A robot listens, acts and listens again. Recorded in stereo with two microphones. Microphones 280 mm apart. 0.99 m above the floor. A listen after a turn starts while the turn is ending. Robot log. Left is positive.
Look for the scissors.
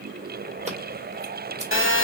note: The scissors: about 25° right or 155° right.
cmd yaw -25
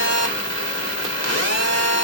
cmd idle
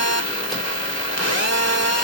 cmd idle
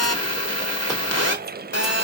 end: I heard scissors, but can't make it out now. It was about straight ahead or 130° right.